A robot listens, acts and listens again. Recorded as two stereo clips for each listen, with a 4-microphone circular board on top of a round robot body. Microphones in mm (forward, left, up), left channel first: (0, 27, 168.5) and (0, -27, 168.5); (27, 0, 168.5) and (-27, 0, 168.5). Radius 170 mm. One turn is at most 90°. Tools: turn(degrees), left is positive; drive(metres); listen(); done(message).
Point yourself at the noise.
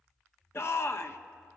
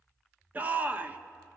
turn(degrees=90)
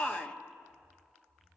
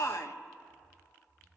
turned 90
turn(degrees=20)
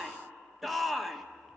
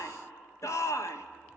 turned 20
done("Found it: a shout, straight ahead.")